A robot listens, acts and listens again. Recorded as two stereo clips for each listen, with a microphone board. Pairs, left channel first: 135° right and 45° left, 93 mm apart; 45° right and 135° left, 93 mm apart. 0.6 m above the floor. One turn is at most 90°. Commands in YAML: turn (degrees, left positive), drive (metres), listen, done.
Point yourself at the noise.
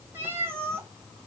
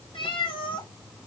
turn: -20
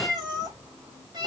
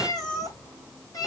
done: "Facing the cat meowing."